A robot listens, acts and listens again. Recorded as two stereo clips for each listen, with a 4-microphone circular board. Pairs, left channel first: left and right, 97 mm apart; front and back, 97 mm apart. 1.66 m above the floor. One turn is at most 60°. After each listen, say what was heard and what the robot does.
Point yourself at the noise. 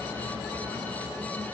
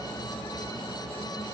Keep listening.
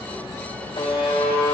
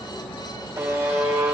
The buzzer: 120° left. Turn 60° left.
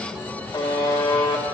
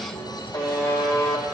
The buzzer is now 50° left. Turn 50° left.
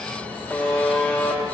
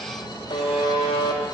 The buzzer is now 15° left. Turn 15° left.
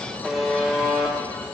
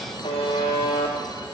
Facing the buzzer.